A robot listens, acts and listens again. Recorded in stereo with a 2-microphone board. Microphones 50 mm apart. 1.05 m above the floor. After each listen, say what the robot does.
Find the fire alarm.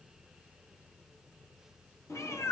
Keep listening.
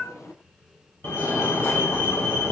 Turn 55° left.
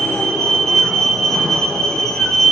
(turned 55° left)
Found it: a fire alarm, straight ahead, over 4 m away.